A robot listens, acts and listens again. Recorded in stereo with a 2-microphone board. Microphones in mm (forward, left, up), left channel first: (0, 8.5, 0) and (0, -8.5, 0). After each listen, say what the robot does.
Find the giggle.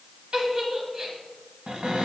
Turn 55° right.
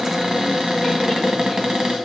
Keep listening.
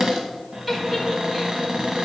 Turn 10° right.
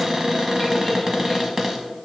Keep listening.
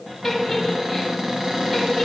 Found it: a giggle, straight ahead, 2 to 4 m away.